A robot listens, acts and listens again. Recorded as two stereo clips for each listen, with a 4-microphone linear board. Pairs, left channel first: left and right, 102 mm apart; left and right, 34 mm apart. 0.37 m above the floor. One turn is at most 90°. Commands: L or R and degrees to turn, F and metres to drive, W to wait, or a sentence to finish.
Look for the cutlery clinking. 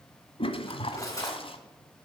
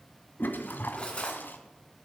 L35
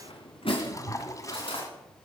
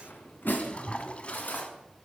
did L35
L90
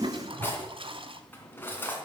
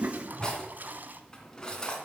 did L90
L20
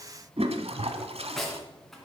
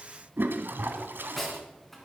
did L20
Facing the cutlery clinking.